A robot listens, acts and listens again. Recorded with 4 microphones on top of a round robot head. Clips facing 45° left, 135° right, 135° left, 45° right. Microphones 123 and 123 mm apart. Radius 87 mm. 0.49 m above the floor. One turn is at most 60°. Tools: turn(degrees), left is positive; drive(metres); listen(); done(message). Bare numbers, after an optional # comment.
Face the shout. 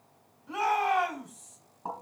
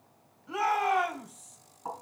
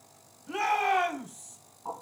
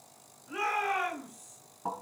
# The shout: 135° left.
turn(60)
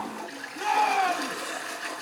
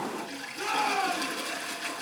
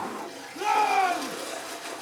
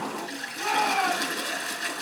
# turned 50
# The shout is now 85° left.
turn(60)
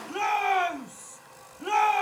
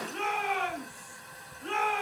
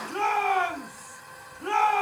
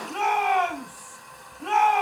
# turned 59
# The shout is now 30° left.
turn(30)
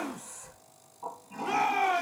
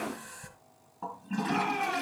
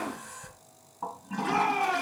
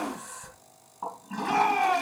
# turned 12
# The shout is now 15° left.
turn(15)
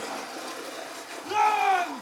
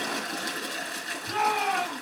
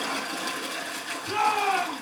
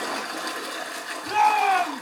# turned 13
done("Facing the shout.")